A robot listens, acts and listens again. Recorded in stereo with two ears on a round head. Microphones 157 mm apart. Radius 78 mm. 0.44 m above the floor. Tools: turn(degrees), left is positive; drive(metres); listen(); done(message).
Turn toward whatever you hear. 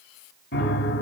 turn(degrees=60)
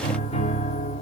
turn(degrees=45)
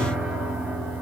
done("Found it: a piano, straight ahead, 2 to 4 m away.")